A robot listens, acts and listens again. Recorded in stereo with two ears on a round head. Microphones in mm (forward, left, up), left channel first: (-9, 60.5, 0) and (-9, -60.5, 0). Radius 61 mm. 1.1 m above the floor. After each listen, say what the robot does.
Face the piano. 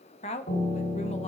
Turn 90° left.
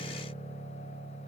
Facing the piano.